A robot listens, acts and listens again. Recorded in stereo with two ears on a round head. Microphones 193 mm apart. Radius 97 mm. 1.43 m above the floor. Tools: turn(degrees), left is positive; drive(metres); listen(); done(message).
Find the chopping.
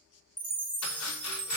turn(degrees=90)
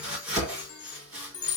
done("Facing the chopping, 2 to 4 m away.")